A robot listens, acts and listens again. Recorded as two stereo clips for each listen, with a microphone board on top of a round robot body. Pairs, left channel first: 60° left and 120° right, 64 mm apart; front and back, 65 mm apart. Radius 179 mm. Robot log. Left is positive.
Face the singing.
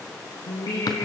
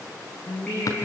note: The singing: 75° left.
cmd yaw +75
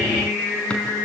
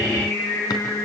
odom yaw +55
note: The singing is now 15° left.
cmd yaw +15
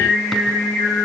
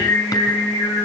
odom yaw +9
end: Facing the singing, over 4 m away.